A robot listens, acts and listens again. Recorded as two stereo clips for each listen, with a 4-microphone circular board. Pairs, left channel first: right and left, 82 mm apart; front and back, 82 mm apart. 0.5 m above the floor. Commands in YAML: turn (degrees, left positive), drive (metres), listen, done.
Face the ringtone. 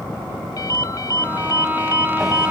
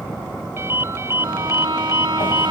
turn: -125
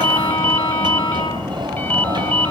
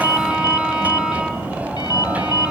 turn: -25
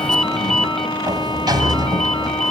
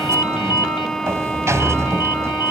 done: "Facing the ringtone, under 1 m away."